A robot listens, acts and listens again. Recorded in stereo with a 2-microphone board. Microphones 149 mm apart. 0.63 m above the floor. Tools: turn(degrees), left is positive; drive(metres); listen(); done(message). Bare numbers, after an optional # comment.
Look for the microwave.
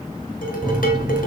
# The microwave: about 30° right or 150° right.
turn(-30)
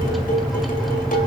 done("Facing the microwave.")